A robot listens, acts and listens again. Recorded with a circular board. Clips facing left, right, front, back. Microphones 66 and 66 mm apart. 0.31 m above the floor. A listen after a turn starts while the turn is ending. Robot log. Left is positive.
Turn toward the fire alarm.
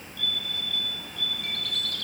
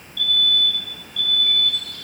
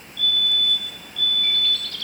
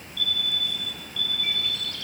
note: The fire alarm: 150° left.
cmd yaw +150
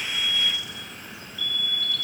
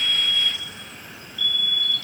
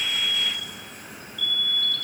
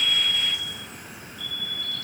note: The fire alarm is now 10° left.
cmd yaw +10
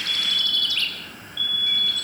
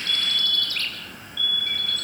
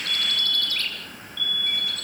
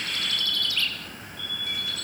end: Found it: a fire alarm, straight ahead, over 4 m away.